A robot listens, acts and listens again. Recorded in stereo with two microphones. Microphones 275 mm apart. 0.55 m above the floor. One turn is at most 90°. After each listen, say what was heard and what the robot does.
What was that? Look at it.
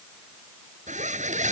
The zipper: about 25° right or 155° right. Turn 25° right.
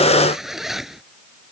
Found it: a zipper, straight ahead.